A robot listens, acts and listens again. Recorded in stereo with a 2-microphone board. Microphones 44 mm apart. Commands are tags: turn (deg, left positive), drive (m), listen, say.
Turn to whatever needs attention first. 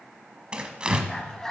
<turn deg="30"/>
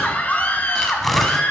<turn deg="140"/>
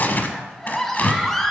<turn deg="10"/>
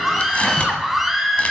<say>Found it: a scream, straight ahead, 2 to 4 m away.</say>